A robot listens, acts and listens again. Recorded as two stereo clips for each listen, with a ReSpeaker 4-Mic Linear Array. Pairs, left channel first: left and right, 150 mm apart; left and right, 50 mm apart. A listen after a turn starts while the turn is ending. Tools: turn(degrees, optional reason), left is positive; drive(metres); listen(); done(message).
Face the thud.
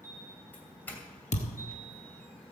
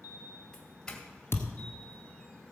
turn(degrees=50, reason="The thud: about 50° left or 130° left.")
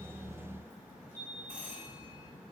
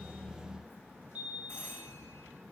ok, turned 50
listen()
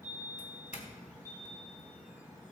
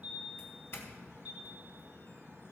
done("I heard a thud, but can't make it out now. It was about straight ahead or 80° left.")